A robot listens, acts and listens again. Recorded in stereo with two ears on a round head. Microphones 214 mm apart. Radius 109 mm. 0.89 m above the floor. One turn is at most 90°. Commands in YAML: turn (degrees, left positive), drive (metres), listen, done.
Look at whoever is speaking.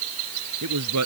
turn: -90
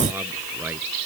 listen: true
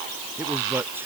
listen: true
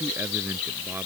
done: "I heard a man speaking from this way, but can't make it out now."